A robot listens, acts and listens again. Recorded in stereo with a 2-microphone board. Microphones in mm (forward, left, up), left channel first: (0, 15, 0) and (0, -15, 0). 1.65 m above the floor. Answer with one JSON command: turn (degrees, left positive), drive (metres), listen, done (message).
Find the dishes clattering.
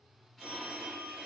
{"listen": true}
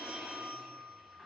{"listen": true}
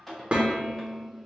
{"turn": -35}
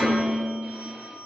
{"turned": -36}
{"turn": -10}
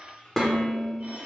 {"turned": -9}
{"done": "Facing the dishes clattering."}